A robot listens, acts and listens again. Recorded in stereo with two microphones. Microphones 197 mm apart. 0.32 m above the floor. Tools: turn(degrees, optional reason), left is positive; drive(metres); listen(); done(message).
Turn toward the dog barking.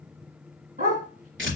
turn(degrees=-45, reason="The dog barking: about 45° right or 135° right.")
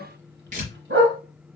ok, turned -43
turn(degrees=-90, reason="So it is at 90° right.")
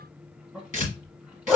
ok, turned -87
done("Facing the dog barking, 1 to 2 m away.")